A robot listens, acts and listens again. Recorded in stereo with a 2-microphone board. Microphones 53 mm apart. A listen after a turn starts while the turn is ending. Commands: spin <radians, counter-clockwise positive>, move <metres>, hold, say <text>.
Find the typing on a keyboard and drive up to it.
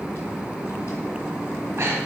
hold
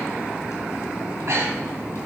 hold
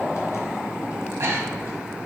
say I can't make out typing on a keyboard, only breathing.